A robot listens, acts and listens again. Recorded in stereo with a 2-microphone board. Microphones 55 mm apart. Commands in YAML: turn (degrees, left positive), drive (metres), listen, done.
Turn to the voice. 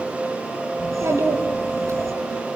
turn: -60
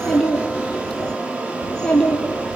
turn: 15
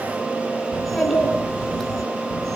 done: "Facing the child speaking."